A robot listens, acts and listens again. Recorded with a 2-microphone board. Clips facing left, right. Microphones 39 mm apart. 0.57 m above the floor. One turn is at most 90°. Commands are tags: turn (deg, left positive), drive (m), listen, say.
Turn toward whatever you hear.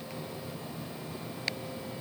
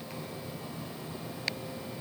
<listen/>
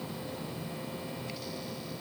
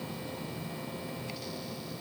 <listen/>
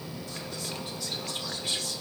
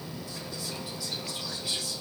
<turn deg="55"/>
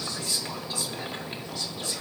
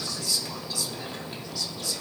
<turn deg="45"/>
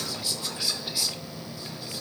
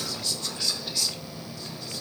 <turn deg="15"/>
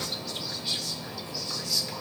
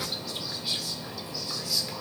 <say>Found it: whispering, straight ahead, 1 to 2 m away.</say>